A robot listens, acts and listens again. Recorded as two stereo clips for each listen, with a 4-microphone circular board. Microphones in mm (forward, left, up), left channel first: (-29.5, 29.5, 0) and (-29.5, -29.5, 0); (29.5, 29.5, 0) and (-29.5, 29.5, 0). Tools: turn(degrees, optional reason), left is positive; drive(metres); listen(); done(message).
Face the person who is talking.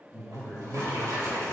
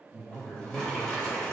done("Facing the man speaking, 1 to 2 m away.")